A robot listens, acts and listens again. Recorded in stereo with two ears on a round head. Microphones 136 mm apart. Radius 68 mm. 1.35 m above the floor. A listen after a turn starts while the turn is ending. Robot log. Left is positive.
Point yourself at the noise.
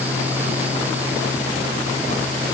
cmd idle
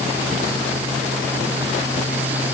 cmd idle
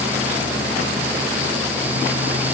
end: I can't make out anything to turn to.